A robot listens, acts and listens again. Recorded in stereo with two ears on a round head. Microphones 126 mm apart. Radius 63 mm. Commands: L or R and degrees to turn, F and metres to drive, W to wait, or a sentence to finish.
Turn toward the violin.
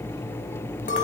W
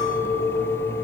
W
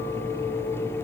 I can't make out a violin, only a clink.